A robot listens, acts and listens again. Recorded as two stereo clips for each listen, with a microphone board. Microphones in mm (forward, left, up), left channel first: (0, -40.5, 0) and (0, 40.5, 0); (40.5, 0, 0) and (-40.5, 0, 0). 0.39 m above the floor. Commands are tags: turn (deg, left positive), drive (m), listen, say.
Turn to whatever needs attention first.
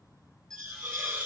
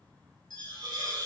<say>Facing the alarm.</say>